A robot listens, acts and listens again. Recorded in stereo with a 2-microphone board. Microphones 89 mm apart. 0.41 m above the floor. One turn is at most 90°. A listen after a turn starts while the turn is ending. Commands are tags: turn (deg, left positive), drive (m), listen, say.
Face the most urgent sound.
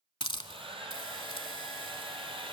<listen/>
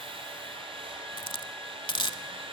<listen/>
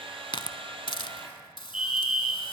<turn deg="-30"/>
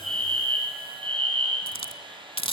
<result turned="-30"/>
<turn deg="20"/>
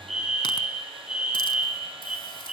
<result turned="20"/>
<turn deg="-10"/>
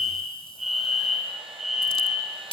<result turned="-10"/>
<say>Facing the fire alarm.</say>